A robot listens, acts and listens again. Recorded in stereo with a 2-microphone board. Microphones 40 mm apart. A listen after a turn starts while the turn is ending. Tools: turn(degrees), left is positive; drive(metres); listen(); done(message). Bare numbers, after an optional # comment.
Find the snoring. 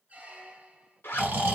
# The snoring: about 55° right or 125° right.
turn(-55)
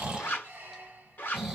# So it is at 10° right.
turn(-10)
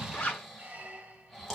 done("Found it: snoring, straight ahead, 1 to 2 m away.")